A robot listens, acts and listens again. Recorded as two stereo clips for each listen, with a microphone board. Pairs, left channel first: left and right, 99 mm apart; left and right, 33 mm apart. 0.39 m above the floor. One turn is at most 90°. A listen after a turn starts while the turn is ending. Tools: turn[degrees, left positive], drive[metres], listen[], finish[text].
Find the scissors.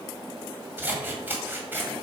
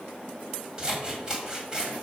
Thought: The scissors: about 20° right or 160° right.
Action: turn[-20]
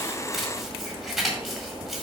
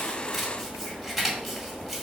Action: finish[Found it: scissors, straight ahead, 1 to 2 m away.]